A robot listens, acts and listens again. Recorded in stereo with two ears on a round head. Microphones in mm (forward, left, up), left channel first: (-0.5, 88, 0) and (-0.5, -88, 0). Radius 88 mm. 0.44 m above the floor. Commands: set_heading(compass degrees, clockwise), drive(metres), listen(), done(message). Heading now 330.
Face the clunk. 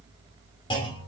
set_heading(305)
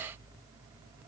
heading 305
listen()
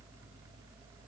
done("I heard a clunk, but can't make it out now. It was about straight ahead or 130° left.")